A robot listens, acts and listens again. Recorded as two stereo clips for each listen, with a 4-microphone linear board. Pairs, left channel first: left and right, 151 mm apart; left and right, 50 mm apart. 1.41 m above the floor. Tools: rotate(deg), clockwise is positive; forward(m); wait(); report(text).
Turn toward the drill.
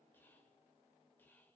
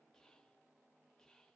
wait()
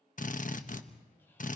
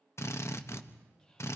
rotate(-60)
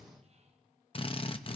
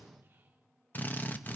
rotate(-45)
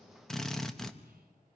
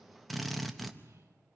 report("Facing the drill, 1 to 2 m away.")